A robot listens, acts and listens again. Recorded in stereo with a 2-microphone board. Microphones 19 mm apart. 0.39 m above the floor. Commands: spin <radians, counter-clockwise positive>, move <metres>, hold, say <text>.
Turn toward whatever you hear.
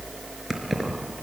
spin -0.52
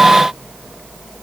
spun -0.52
hold
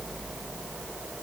hold
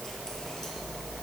say I heard keys jangling, but can't make it out now. It was about 20° left or 140° right.